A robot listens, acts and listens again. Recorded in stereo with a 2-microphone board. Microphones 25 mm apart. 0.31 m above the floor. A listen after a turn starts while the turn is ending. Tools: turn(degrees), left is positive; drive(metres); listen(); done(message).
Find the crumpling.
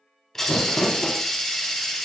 turn(degrees=35)
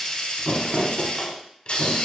done("Found it: crumpling, straight ahead.")